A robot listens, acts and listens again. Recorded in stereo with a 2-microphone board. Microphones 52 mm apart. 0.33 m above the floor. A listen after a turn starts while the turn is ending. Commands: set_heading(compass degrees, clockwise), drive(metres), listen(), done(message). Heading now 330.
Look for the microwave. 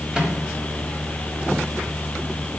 set_heading(345)
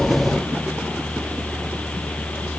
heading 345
listen()
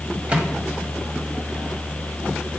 set_heading(140)
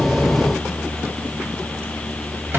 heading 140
listen()
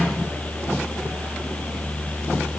set_heading(190)
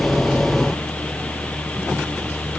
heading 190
listen()
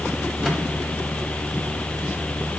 listen()
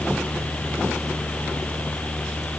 done("Facing where the microwave came from. I can't hear it now.")